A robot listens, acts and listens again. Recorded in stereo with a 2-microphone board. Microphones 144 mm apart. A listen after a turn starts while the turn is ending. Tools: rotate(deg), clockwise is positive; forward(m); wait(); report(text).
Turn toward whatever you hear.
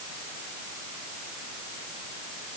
wait()
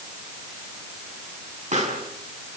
rotate(65)
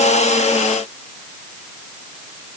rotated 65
wait()
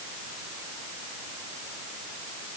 report("I heard a pop, but can't make it out now. It was about straight ahead or 50° right.")